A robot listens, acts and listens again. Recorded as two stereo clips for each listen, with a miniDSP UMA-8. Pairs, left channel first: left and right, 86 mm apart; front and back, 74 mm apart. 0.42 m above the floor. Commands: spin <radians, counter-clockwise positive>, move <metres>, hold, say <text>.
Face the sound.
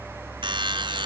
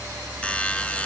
spin -1.31
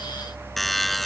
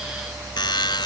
say Found it: a buzzer, straight ahead.